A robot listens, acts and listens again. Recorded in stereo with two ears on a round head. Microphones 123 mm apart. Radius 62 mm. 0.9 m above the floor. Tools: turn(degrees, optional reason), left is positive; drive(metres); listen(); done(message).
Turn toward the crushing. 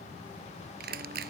turn(degrees=-90)
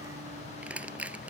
turn(degrees=-10, reason="So it is at 10° right.")
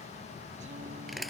done("Facing the crushing.")